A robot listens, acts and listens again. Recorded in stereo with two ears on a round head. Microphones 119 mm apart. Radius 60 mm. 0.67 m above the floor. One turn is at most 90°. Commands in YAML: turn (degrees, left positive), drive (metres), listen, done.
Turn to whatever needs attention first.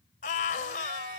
turn: 65
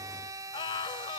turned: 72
turn: 35
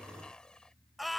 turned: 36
done: "Facing the scream."